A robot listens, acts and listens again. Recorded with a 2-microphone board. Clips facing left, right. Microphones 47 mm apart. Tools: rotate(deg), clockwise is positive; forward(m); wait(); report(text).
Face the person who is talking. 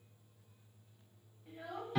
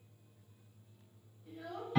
rotate(-20)
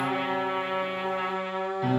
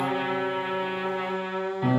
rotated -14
wait()
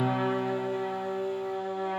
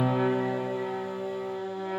wait()
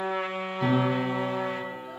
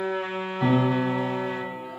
report("I heard a child speaking, but can't make it out now. It was about 5° left or 145° left.")